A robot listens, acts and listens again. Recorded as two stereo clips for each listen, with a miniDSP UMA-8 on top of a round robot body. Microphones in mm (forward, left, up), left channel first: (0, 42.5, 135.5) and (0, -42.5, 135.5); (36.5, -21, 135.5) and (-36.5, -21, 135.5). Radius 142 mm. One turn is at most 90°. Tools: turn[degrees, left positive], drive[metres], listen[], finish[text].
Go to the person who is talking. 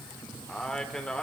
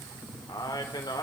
Thought: The man speaking: 10° left.
Action: turn[10]
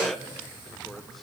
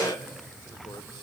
Action: listen[]
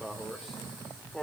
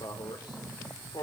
Action: drive[1.0]
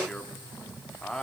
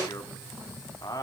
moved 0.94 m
Thought: The man speaking is now 10° left.
Action: turn[10]
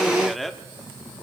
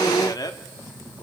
Action: drive[1.0]
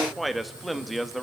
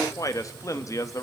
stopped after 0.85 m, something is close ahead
Action: finish[I am next to the man speaking.]